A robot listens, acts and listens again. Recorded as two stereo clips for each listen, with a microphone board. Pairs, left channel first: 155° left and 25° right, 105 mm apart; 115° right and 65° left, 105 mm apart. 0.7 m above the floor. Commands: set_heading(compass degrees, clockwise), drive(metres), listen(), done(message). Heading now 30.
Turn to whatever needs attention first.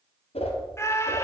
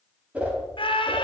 set_heading(170)
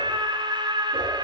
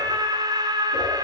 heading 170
set_heading(150)
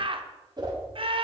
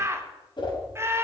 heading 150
done("Found it: a scream, straight ahead.")